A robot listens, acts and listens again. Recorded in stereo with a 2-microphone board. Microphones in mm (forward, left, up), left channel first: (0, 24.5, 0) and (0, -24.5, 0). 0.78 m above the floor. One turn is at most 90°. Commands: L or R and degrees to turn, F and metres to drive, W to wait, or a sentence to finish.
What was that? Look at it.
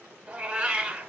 R25
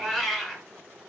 Facing the cat meowing.